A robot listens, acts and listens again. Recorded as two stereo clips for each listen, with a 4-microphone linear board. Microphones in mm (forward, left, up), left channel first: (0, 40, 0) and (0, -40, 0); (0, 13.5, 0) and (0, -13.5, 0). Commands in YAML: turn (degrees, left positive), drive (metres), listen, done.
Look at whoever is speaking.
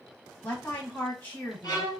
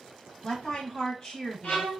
turn: 20
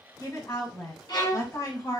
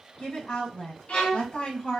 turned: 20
turn: 140
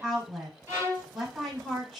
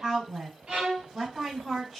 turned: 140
done: "Found it: a woman speaking, straight ahead, 1 to 2 m away."